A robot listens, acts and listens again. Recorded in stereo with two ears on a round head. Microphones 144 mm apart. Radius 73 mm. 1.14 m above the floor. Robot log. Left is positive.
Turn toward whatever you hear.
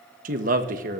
note: The man speaking: about 55° right or 125° right.
cmd yaw -55
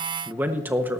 note: So it is at 15° right.
cmd yaw -15
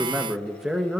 end: Found it: a man speaking, straight ahead, 1 to 2 m away.